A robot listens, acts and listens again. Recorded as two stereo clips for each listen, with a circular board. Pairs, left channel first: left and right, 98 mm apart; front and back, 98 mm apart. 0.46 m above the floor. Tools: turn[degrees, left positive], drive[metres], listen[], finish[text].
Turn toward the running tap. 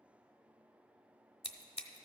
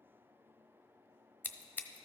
Action: listen[]
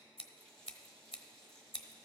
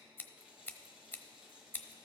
Thought: The running tap: 100° right.
Action: turn[-100]
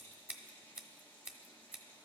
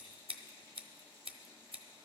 Thought: The running tap is now 20° left.
Action: turn[20]
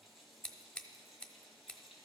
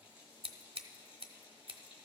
Action: finish[Found it: a running tap, straight ahead.]